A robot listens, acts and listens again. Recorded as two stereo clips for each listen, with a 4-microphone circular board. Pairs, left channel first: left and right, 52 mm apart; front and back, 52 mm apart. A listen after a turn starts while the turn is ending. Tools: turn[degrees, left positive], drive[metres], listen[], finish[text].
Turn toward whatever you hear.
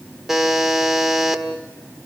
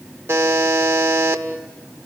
Thought: The buzzer: 170° right.
Action: turn[-170]
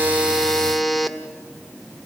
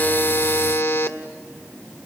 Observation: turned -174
Action: finish[Facing the buzzer, 1 to 2 m away.]